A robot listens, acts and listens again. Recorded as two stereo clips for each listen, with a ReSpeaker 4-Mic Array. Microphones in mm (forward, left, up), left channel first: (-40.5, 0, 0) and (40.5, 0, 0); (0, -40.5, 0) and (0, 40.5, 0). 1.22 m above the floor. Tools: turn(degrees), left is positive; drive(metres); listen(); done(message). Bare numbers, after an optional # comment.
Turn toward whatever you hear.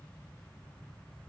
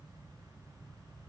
listen()
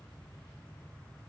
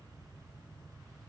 listen()
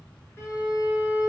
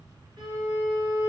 # The violin: 120° left.
turn(120)
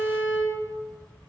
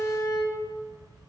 # The violin is now 35° left.
turn(35)
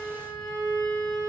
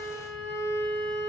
done("Facing the violin, 1 to 2 m away.")